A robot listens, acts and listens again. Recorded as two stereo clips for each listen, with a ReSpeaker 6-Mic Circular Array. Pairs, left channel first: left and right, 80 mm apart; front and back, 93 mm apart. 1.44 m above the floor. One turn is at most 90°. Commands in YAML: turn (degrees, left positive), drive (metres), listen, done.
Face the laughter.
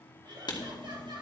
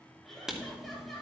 turn: -90
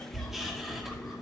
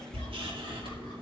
listen: true
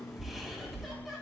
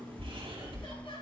listen: true
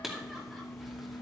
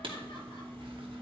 done: "I heard laughter from this way, but can't make it out now."